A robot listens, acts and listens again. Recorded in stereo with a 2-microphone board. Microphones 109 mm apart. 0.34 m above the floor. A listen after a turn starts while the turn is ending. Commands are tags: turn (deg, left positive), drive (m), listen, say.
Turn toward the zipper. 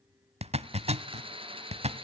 <turn deg="-75"/>
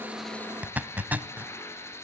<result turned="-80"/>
<turn deg="-15"/>
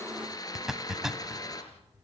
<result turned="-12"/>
<say>Found it: a zipper, straight ahead, under 1 m away.</say>